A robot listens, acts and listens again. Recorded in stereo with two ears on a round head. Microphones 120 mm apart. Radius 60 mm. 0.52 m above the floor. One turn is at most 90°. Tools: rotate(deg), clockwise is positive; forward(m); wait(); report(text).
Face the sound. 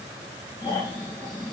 rotate(-25)
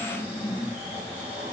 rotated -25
rotate(-90)
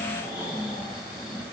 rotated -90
rotate(-25)
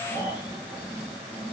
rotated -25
rotate(15)
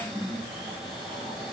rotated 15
report("Found it: snoring, straight ahead, 2 to 4 m away.")